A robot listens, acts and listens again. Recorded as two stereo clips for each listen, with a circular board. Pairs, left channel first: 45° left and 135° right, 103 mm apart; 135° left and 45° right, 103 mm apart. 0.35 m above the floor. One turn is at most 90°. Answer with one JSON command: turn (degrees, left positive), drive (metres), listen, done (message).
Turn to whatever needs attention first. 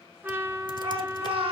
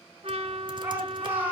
{"turn": -90}
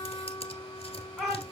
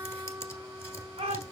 {"turn": -45}
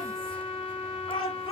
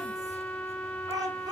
{"turn": 10}
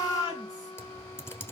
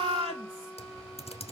{"done": "Facing the shout."}